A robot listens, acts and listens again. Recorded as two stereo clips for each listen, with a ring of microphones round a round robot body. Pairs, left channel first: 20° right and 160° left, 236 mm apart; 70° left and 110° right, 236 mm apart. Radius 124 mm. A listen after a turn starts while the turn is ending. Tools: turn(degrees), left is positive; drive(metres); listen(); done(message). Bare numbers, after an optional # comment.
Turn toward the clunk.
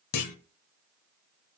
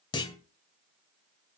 done("Found it: a clunk, straight ahead, 1 to 2 m away.")